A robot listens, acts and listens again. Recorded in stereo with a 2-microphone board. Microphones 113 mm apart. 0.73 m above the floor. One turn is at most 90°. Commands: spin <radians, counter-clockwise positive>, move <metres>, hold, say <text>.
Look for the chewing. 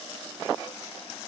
hold
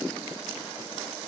hold
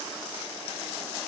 say I can't make out chewing to turn to.